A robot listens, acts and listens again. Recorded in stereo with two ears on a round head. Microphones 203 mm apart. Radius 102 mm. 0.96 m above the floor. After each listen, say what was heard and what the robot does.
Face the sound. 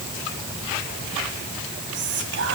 The whispering: about 55° right or 125° right. Turn 55° right.
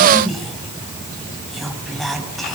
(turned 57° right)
Facing the whispering, over 4 m away.